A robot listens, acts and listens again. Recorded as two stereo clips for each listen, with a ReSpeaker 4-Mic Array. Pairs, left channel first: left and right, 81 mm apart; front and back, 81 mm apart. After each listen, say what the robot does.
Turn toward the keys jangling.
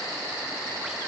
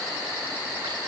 Keep listening.
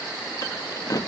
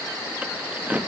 Turn 115° left.
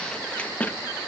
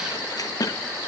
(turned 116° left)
Turn 25° left.
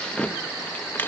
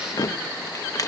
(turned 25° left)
Turn 35° left.
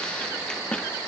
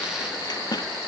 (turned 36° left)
Turn 15° left.
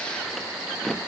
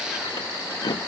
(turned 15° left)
Found it: keys jangling, straight ahead, 1 to 2 m away.